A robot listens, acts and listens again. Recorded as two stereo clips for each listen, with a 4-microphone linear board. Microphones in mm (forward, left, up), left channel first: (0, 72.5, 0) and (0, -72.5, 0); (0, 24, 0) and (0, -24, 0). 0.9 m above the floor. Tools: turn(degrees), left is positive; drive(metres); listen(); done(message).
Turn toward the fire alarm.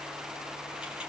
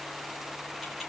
listen()
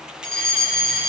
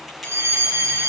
turn(degrees=-70)
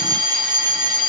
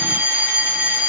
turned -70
turn(degrees=-30)
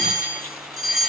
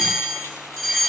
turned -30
done("Found it: a fire alarm, straight ahead.")